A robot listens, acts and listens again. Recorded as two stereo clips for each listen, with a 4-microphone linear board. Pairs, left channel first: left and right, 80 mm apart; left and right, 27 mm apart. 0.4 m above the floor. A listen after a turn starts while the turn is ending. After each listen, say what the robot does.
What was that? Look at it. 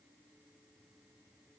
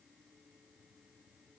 Keep listening.
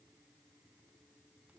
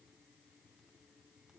Keep listening.
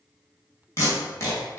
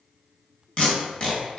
Turn 40° left.
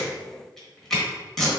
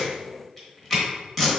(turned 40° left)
Turn 10° left.
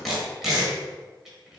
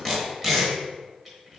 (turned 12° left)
Found it: tape being pulled, straight ahead.